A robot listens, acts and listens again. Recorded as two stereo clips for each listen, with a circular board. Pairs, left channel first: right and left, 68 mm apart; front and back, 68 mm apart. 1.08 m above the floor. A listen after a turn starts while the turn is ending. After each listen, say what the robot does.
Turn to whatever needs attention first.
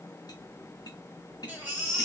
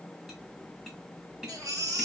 Turn 150° left.
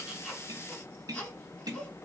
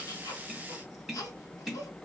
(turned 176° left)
Turn 25° right.
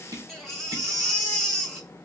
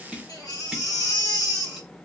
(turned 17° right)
Facing the baby crying.